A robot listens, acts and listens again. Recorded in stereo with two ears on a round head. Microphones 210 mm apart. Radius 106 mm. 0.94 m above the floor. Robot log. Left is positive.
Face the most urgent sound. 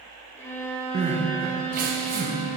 note: The crying: about 35° right or 145° right.
cmd yaw -35
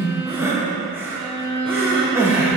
note: So it is at 10° right.
cmd yaw -10
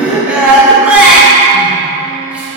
end: Found it: crying, straight ahead, under 1 m away.